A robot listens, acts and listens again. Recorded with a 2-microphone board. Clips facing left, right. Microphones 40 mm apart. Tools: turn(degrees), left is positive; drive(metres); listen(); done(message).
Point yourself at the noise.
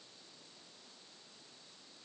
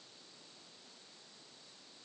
listen()
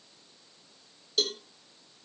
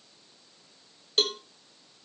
turn(degrees=-50)
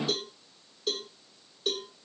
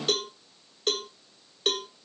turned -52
turn(degrees=-75)
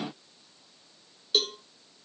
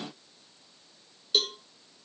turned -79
done("Found it: a cowbell, straight ahead, 1 to 2 m away.")